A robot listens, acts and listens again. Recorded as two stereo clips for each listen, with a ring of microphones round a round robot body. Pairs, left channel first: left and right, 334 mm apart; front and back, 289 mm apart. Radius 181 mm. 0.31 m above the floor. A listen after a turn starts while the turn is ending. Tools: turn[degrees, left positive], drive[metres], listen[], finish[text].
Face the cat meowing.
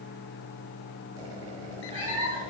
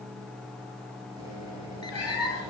Thought: The cat meowing: 15° right.
Action: turn[-15]
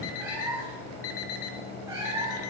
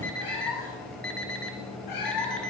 Thought: The cat meowing is now 10° right.
Action: turn[-10]
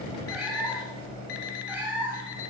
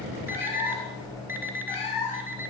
Action: finish[Found it: a cat meowing, straight ahead, 2 to 4 m away.]